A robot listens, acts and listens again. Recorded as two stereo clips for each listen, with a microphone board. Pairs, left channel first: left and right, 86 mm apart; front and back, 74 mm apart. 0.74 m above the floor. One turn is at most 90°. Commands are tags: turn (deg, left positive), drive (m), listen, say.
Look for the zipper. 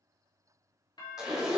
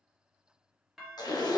<say>Found it: a zipper, straight ahead, 1 to 2 m away.</say>